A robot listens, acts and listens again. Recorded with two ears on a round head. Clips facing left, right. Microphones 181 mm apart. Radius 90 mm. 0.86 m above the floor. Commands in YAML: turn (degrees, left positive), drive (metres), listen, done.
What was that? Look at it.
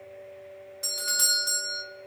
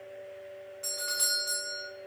turn: 55
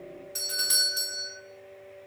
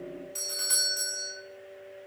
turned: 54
turn: 20
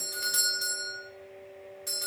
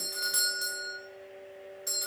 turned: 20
done: "Facing the doorbell."